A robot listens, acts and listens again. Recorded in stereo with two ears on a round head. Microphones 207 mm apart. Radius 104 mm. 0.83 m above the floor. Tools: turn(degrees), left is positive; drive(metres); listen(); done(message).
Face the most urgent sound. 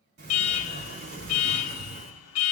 turn(degrees=70)
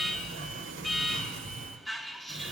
done("Found it: an alarm, straight ahead.")